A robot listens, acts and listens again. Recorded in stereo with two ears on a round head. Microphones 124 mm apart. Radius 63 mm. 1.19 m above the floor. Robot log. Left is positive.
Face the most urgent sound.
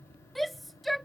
cmd yaw +30
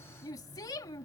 note: So it is at 150° left.
cmd yaw +150
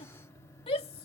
note: The shout is now 40° left.
cmd yaw +40
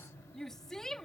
end: Facing the shout.